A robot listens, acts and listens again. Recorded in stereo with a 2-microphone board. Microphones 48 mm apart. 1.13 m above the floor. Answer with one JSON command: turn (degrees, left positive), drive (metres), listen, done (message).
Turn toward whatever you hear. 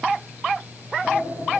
{"turn": 35}
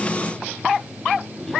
{"done": "Facing the sliding door."}